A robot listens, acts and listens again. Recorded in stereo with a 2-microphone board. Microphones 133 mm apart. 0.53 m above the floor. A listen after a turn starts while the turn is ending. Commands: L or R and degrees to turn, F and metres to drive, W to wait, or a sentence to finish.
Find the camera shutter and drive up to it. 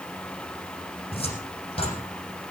W
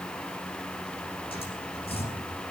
W
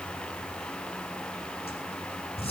I can't make out a camera shutter to turn to.